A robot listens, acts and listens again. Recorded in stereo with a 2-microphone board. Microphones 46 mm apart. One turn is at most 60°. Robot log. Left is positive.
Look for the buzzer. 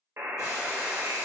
note: The buzzer: about 60° right or 120° right.
cmd yaw -60
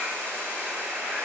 note: So it is at 40° right.
cmd yaw -40
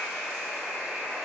note: The buzzer is now 10° left.
cmd yaw +10
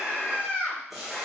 end: Found it: a buzzer, straight ahead, under 1 m away.